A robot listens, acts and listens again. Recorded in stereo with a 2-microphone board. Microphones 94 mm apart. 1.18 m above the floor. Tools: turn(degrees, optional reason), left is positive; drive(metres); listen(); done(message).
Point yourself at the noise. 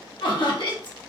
turn(degrees=60, reason="The laughter: about 60° left or 120° left.")
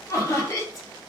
turn(degrees=40, reason="So it is at 40° left.")
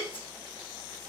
listen()
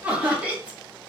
turn(degrees=-15, reason="The laughter is now 15° right.")
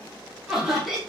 done("Facing the laughter.")